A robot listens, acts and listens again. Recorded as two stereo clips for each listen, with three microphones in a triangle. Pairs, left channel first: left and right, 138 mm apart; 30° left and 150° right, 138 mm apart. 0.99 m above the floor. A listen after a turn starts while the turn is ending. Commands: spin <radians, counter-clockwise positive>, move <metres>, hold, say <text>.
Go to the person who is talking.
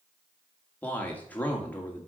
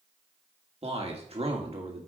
spin 2.97
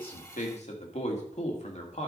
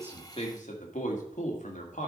spin 0.96
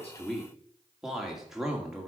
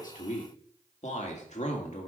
move 1.0
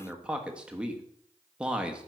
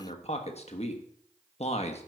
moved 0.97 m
spin -0.17
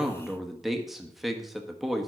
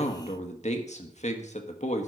move 1.0
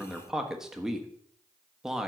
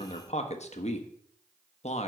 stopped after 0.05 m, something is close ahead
say Arrived at the man speaking, straight ahead.